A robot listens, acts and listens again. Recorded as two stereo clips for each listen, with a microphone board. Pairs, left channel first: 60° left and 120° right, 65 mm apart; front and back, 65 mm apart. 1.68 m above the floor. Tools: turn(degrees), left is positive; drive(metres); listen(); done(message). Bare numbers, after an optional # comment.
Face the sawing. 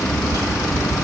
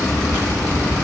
listen()
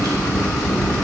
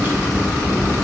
listen()
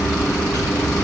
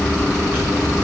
done("I can't make out sawing to turn to.")